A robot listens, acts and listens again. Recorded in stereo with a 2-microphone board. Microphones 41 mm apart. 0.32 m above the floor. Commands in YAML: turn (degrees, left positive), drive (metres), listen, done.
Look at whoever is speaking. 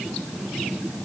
listen: true
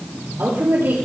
turn: -65
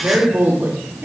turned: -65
turn: -50
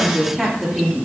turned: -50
done: "Found it: a woman speaking, straight ahead, over 4 m away."